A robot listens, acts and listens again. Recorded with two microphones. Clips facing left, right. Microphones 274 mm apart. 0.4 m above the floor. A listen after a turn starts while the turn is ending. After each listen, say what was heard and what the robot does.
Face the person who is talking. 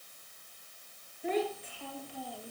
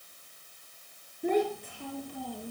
The child speaking: about 55° right or 125° right. Turn 55° right.
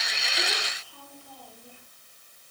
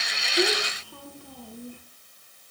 So it is at 65° right. Turn 65° right.
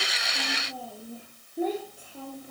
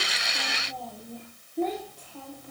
The child speaking is now 10° left. Turn 10° left.
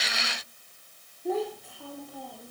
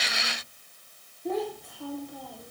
Found it: a child speaking, straight ahead, over 4 m away.